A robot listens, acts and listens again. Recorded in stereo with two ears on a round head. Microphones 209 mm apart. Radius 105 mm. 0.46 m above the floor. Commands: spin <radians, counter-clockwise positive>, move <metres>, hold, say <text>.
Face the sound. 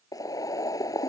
spin 0.26
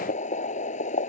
spin 2.62
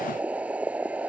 say Found it: boiling, straight ahead.